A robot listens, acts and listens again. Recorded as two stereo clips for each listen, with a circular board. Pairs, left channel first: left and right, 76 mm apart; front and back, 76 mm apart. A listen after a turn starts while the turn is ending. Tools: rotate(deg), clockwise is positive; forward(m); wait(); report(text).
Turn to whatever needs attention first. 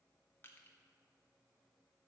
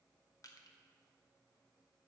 wait()
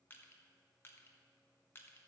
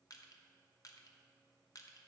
wait()
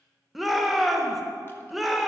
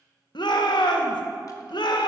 report("Found it: a shout, straight ahead.")